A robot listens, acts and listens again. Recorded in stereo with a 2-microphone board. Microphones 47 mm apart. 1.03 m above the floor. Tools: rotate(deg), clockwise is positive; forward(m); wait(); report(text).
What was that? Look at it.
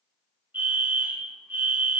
rotate(45)
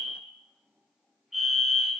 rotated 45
report("Facing the fire alarm, 2 to 4 m away.")